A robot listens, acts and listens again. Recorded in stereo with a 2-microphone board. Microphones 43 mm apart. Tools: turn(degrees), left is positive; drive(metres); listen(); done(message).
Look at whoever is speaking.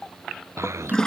turn(degrees=-90)
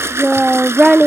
done("Facing the child speaking.")